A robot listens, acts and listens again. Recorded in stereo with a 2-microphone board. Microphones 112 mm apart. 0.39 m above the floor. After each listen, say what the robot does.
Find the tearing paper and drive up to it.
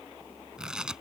Turn 30° right.
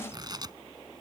Turn 145° right.
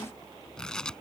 Drive 1.0 m forward.
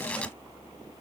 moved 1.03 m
Turn 10° left.
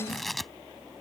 Drive 1.0 m forward.
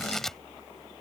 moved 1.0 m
Drive 1.0 m forward.
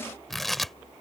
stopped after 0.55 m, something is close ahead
Arrived at the tearing paper, straight ahead.